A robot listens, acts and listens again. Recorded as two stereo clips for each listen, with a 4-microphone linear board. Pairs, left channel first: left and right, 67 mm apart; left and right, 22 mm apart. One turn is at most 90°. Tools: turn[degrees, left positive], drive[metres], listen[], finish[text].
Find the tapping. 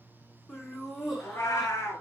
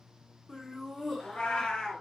Action: listen[]
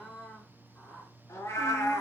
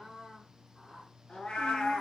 Action: listen[]
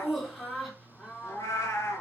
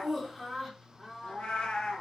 Action: finish[I can't make out tapping to turn to.]